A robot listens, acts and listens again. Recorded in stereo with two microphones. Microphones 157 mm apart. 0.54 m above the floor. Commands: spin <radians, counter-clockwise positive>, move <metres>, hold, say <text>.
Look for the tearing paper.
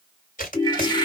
spin 1.05
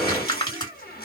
spin 0.52
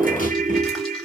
hold
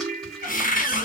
hold
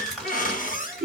say Found it: tearing paper, straight ahead.